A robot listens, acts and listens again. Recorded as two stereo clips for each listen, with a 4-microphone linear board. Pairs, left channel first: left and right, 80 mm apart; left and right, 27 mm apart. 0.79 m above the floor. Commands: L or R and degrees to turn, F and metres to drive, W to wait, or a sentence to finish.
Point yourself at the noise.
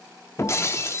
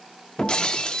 L35
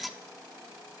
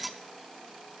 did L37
Found it: breaking glass, straight ahead, under 1 m away.